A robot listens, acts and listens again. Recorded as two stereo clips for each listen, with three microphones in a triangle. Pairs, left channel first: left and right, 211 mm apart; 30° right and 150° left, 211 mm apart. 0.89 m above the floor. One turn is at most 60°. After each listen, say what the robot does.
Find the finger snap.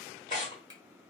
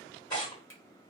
Turn 20° right.
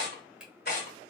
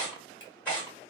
Found it: a finger snap, straight ahead.